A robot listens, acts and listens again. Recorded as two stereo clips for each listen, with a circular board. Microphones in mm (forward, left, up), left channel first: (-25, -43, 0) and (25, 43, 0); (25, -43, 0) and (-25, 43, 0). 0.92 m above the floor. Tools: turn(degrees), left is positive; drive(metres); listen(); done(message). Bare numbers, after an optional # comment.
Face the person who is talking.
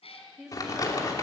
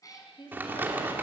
# The woman speaking: 25° right.
turn(-25)
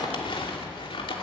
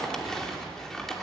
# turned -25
listen()
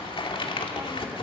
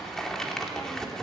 listen()
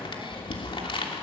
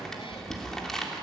done("Facing where the woman speaking came from. I can't hear it now.")